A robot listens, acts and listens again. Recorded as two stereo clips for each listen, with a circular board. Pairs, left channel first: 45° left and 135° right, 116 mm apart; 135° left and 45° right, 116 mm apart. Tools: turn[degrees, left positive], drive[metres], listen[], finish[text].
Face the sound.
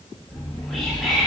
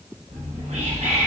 Thought: The whispering: 45° right.
Action: turn[-45]
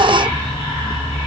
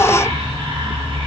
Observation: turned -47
Action: finish[Found it: whispering, straight ahead, under 1 m away.]